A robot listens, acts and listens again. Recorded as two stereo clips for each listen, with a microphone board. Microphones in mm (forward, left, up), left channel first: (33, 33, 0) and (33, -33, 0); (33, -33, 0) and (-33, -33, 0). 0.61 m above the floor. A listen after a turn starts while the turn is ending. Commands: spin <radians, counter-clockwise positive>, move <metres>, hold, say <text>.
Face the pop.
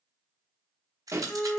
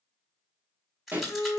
spin -2.18
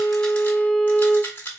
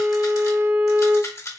say I heard a pop from this way, but can't make it out now.